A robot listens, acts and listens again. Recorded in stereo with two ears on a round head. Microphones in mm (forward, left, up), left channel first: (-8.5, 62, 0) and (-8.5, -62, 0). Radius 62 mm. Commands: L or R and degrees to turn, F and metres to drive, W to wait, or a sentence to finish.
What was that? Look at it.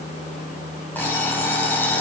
L30
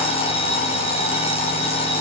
L135
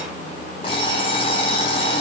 L35
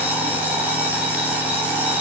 R10
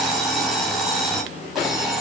Found it: an alarm clock, straight ahead, 2 to 4 m away.